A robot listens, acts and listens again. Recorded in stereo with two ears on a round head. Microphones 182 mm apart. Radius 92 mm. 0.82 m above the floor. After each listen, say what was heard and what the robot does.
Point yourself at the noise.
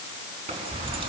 The keys jangling: about 30° right or 150° right. Turn 30° right.
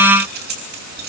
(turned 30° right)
So it is at 125° right. Turn 125° right.
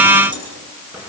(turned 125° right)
Facing the keys jangling, over 4 m away.